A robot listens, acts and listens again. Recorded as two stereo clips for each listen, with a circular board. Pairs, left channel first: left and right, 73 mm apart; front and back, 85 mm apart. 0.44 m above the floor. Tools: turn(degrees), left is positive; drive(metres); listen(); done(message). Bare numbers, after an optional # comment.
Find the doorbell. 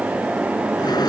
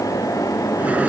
listen()
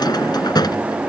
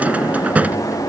listen()
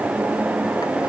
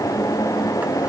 done("I can't make out a doorbell, only a drawer.")